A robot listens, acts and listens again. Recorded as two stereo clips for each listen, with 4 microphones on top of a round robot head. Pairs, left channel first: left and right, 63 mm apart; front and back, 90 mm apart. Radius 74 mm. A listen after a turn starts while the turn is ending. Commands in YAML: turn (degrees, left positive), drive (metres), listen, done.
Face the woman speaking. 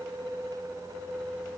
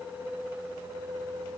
listen: true
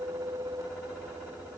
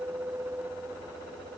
listen: true
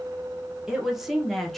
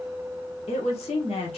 done: "Facing the woman speaking."